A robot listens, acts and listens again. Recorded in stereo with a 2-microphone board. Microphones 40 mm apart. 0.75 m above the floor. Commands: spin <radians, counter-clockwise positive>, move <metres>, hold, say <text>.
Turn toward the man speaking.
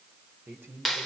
spin -1.31
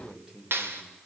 spin -0.35
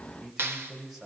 say Facing the man speaking, over 4 m away.